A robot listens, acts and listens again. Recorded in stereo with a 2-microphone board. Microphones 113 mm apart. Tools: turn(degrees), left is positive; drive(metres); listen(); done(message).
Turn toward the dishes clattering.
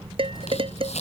turn(degrees=-55)
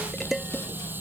done("Found it: dishes clattering, straight ahead.")